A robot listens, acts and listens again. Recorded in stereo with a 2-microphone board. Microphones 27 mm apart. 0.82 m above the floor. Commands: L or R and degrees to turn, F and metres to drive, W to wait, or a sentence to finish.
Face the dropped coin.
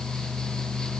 W
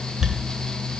R30
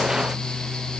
W
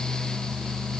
I heard a dropped coin, but can't make it out now. It was about 20° left or 140° right.